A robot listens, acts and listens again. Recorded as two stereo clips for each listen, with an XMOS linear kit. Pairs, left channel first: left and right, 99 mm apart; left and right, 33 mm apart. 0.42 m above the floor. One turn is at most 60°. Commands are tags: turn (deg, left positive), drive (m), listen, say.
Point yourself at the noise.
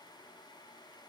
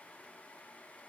<listen/>
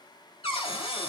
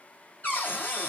<turn deg="55"/>
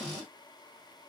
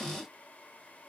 <turn deg="15"/>
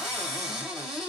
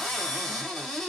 <say>Found it: a cupboard door, straight ahead.</say>